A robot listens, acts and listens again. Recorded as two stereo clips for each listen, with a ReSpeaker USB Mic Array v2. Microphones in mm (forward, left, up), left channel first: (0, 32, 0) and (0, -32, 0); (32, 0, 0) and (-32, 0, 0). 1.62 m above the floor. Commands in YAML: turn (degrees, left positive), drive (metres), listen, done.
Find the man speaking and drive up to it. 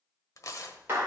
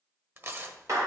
listen: true
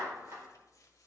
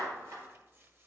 listen: true
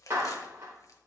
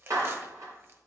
done: "I can't make out a man speaking to turn to."